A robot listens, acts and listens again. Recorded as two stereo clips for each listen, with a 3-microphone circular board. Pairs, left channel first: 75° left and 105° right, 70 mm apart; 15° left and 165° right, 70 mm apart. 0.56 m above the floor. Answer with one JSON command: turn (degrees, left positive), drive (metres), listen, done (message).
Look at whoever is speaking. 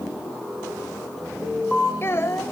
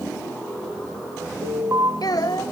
{"turn": 25}
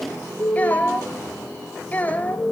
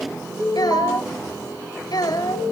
{"turn": 10}
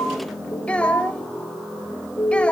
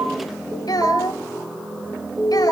{"done": "Found it: a child speaking, straight ahead, 2 to 4 m away."}